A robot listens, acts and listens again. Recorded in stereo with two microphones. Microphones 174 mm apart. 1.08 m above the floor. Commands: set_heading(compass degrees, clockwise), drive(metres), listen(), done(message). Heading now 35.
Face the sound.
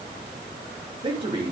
set_heading(65)
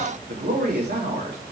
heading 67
set_heading(177)
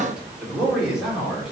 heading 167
done("Facing the man speaking, 2 to 4 m away.")